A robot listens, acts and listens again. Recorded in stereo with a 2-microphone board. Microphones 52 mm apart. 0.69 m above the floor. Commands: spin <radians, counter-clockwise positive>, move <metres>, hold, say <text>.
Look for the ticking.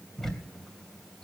spin 0.52
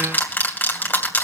spin 2.53
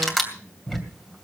say Facing the ticking.